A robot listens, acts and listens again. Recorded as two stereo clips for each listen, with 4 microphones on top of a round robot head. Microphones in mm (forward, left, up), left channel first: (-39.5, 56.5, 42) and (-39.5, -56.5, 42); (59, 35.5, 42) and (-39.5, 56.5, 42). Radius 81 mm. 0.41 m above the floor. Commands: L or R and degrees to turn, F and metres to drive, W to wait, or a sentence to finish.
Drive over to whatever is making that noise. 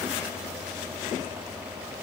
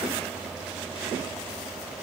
W
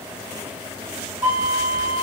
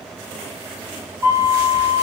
R130
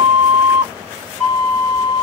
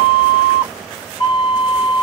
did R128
F1.0
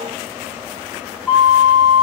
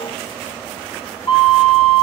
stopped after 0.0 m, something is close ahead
Something is in my way. I am facing the flute but have not reached it.